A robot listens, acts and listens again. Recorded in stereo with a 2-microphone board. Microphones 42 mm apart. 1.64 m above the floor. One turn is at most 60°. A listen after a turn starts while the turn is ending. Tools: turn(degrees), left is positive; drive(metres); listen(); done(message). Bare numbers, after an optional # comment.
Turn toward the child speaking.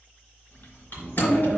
# The child speaking: about 60° left or 120° left.
turn(60)
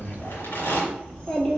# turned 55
# So it is at 25° left.
turn(25)
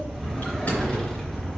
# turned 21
listen()
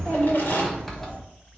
# The child speaking is now 20° left.
turn(20)
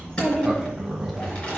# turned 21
# The child speaking is now 10° left.
turn(10)
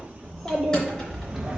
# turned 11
done("Facing the child speaking.")